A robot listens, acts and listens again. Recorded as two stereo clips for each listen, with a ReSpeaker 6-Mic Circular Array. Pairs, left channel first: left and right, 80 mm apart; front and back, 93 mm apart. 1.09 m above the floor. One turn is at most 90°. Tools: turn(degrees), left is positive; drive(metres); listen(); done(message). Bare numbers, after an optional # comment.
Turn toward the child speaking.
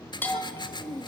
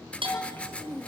# The child speaking: 70° right.
turn(-70)
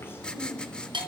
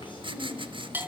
# The child speaking is now 30° left.
turn(30)
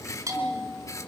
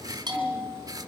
listen()
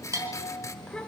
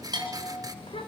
# The child speaking is now 10° left.
turn(10)
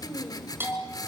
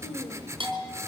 done("Found it: a child speaking, straight ahead, 2 to 4 m away.")